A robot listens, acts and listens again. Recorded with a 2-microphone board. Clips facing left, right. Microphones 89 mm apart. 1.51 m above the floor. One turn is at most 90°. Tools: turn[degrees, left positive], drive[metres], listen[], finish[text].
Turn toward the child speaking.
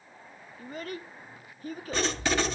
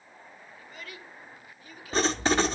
Thought: The child speaking: about 40° left or 140° left.
Action: turn[40]
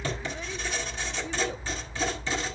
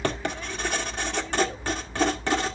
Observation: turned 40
Action: listen[]
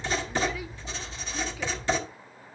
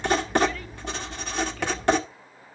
Action: listen[]
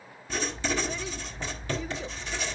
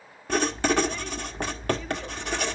Action: finish[I heard a child speaking, but can't make it out now. It was about straight ahead or 100° left.]